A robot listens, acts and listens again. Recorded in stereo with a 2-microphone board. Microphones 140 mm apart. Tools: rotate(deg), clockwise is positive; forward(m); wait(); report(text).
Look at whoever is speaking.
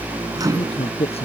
rotate(-45)
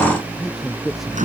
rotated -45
report("Found it: a man speaking, straight ahead.")